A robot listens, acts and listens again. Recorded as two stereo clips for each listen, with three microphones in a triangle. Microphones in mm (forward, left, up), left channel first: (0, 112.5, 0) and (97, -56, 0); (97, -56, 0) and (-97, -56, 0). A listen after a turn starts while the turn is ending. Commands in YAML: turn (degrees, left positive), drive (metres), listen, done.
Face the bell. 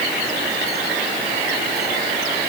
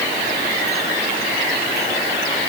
listen: true
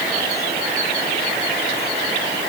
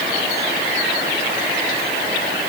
listen: true
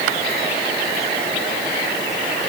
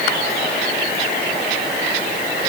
done: "I can't make out a bell to turn to."